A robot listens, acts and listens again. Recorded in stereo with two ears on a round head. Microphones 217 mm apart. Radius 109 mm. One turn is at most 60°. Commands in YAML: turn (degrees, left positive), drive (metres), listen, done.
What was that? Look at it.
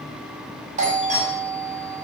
turn: -30
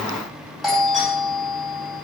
done: "Found it: a doorbell, straight ahead."